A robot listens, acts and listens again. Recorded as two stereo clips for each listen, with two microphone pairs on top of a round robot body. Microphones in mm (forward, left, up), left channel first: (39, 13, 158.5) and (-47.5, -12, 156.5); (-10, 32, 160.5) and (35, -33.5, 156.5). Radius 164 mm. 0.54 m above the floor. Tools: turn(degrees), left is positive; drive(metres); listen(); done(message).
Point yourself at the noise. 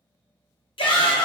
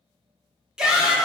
turn(degrees=25)
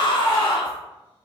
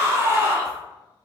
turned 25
done("Facing the shout.")